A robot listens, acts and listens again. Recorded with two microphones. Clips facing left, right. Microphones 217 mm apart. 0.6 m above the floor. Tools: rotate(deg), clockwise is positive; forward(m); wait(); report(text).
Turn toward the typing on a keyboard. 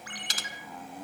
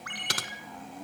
rotate(65)
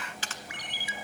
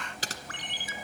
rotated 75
rotate(40)
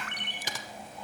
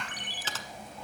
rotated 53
rotate(-15)
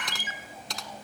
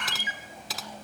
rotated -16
report("Facing the typing on a keyboard, 1 to 2 m away.")